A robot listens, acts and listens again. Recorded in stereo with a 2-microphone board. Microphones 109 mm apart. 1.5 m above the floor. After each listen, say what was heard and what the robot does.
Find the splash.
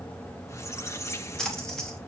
Turn 30° left.
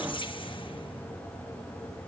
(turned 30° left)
Keep listening.
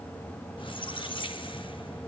I heard a splash, but can't make it out now. It was about 25° right or 145° left.